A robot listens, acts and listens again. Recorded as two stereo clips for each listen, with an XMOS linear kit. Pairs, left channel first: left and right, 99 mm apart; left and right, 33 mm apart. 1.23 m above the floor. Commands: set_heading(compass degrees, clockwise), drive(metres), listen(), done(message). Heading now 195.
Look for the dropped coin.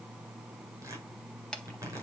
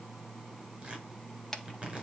listen()
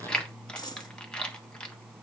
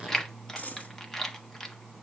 set_heading(150)
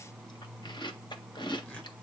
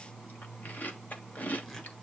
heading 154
listen()
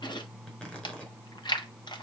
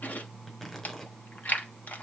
done("I heard a dropped coin, but can't make it out now. It was about straight ahead or 95° left.")